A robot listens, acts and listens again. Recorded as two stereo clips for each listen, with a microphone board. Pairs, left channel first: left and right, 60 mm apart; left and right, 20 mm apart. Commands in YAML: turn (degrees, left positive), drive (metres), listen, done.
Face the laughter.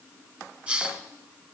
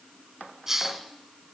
listen: true
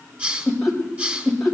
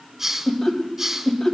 turn: -30
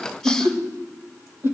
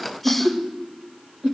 turn: -135
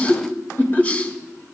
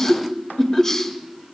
turn: 35
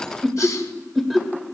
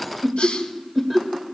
done: "Found it: laughter, straight ahead."